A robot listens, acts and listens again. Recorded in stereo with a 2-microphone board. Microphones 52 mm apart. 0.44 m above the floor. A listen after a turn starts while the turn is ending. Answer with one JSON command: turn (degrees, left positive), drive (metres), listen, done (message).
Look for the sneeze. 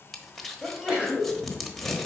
{"turn": -15}
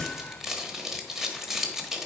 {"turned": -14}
{"listen": true}
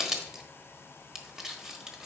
{"done": "I heard a sneeze, but can't make it out now. It was about straight ahead or 150° right."}